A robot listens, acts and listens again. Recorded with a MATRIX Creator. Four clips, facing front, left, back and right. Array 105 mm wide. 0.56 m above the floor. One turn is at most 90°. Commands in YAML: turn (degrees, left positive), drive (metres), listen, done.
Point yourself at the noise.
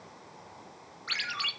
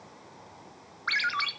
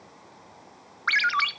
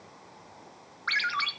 turn: 90
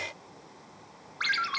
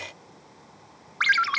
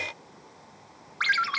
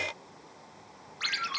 turn: 90
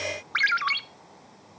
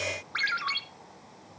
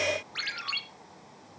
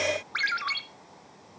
done: "Facing the ringtone."